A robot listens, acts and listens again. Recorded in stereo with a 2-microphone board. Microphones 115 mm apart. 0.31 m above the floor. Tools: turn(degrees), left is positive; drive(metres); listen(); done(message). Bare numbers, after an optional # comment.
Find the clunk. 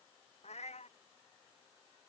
listen()
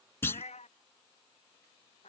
# The clunk: about 20° left or 160° left.
turn(20)
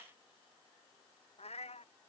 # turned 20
listen()
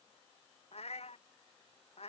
done("I heard a clunk, but can't make it out now. It was about straight ahead or 140° left.")